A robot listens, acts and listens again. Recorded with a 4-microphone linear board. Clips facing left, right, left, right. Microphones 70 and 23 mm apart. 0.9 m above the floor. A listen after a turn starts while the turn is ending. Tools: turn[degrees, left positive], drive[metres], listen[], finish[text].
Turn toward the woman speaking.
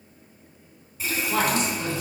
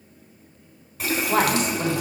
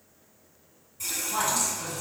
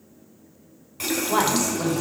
Thought: The woman speaking: about 55° right or 125° right.
Action: turn[-55]
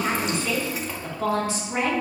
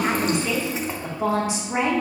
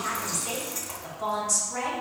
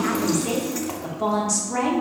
Thought: So it is at 25° right.
Action: turn[-25]
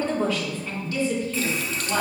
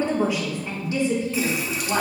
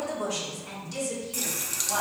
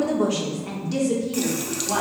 Thought: The woman speaking is now 30° right.
Action: turn[-30]
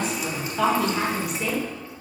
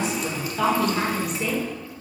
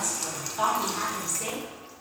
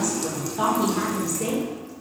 Action: finish[Facing the woman speaking, 2 to 4 m away.]